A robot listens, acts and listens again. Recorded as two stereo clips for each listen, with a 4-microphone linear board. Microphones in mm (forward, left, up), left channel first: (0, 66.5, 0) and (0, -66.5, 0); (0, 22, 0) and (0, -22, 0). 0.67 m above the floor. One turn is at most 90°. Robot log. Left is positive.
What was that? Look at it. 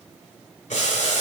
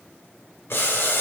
note: The boiling: about 65° left or 115° left.
cmd yaw +65
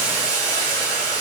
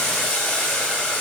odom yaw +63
note: So it is at 30° left.
cmd yaw +30
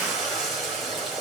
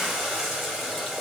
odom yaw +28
end: Found it: boiling, straight ahead.